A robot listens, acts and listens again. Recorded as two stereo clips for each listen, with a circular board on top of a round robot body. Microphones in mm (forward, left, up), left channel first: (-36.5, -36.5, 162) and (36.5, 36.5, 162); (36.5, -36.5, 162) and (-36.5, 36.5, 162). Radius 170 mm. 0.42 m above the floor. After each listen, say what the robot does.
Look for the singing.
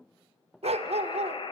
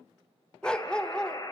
Keep listening.
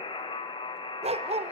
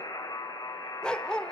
Keep listening.
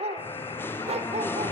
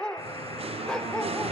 Turn 155° left.
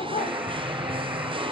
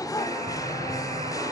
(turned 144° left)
Turn 10° left.
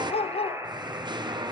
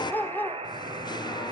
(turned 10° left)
Facing the singing.